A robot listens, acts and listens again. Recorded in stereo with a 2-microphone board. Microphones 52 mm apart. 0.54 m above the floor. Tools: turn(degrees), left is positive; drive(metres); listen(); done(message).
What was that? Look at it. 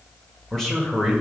turn(degrees=30)
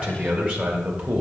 turn(degrees=-20)
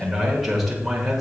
done("Facing the man speaking.")